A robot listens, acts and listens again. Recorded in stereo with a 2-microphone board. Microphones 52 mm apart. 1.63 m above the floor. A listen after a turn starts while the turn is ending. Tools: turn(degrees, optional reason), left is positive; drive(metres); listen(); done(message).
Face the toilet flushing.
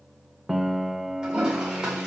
turn(degrees=-15, reason="The toilet flushing: about 15° right or 165° right.")
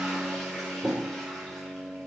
done("Found it: a toilet flushing, straight ahead.")